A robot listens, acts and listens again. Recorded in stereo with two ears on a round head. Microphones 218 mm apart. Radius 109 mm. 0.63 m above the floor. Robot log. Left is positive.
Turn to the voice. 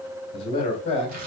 note: The man speaking: about 25° left or 155° left.
cmd yaw +25
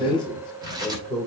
end: Found it: a man speaking, straight ahead.